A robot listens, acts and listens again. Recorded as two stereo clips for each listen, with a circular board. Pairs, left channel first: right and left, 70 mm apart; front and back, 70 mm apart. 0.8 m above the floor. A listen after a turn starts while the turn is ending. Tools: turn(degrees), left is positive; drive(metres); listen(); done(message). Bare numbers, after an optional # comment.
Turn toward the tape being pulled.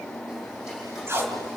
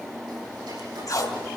# The tape being pulled: 35° left.
turn(35)
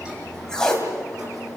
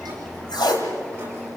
# The tape being pulled is now 10° right.
turn(-10)
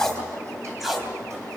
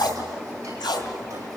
done("Facing the tape being pulled.")